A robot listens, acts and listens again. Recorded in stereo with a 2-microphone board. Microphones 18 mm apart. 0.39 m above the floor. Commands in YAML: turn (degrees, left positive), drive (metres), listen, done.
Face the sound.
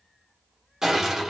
turn: -20
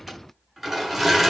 done: "Facing the crushing."